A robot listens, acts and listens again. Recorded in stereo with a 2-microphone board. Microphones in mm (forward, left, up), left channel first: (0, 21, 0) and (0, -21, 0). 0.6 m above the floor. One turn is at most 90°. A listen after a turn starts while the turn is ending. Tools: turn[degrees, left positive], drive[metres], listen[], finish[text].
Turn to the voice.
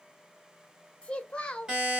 Thought: The child speaking: about 25° left or 155° left.
Action: turn[25]
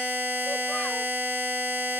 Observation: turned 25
Action: listen[]
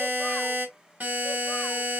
Action: listen[]
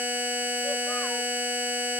Action: finish[I heard a child speaking, but can't make it out now. It was about straight ahead or 130° left.]